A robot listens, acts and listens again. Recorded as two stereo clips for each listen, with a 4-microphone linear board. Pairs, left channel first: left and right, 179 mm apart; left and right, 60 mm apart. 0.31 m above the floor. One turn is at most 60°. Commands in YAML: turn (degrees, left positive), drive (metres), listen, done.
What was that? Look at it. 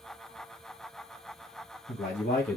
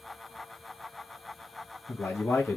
turn: 50
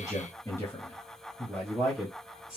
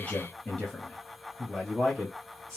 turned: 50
done: "Found it: a man speaking, straight ahead."